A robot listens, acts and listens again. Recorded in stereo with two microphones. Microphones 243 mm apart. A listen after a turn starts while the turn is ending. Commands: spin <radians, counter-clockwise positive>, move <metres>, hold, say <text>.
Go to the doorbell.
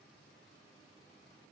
hold
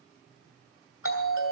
spin 1.13
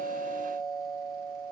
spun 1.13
spin 0.35
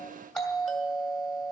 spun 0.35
move 1.0
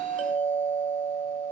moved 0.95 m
move 1.0
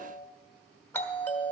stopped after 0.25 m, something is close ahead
spin 0.26
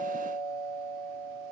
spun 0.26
say Arrived at the doorbell, straight ahead.